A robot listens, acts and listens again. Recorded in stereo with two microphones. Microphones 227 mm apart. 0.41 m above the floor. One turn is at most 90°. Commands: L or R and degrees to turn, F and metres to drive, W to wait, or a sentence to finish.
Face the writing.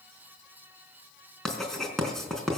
L30
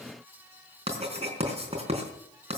R30
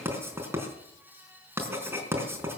R10
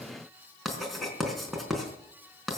Found it: writing, straight ahead.